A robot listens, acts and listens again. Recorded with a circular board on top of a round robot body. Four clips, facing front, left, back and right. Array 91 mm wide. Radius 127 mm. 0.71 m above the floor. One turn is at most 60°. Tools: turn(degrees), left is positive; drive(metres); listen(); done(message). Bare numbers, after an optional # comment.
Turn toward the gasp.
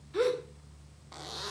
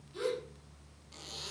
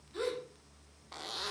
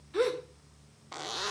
# The gasp: 60° right.
turn(-60)
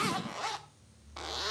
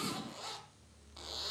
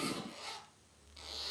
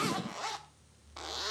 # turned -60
done("Facing where the gasp came from. I can't hear it now.")